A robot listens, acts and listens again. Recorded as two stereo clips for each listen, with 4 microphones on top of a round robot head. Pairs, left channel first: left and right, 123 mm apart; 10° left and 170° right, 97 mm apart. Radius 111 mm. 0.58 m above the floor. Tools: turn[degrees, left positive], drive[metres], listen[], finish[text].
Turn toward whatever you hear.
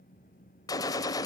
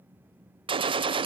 Thought: The gunshot: 155° left.
Action: turn[155]
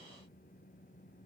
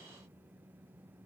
Action: finish[Facing where the gunshot came from. I can't hear it now.]